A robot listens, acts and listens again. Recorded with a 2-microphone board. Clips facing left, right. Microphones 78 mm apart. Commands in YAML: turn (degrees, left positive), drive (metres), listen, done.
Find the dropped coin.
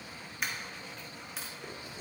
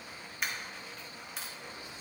turn: 30
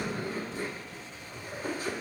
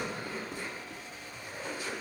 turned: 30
listen: true
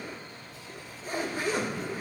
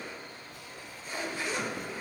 done: "I heard a dropped coin, but can't make it out now. It was about 30° right or 150° left."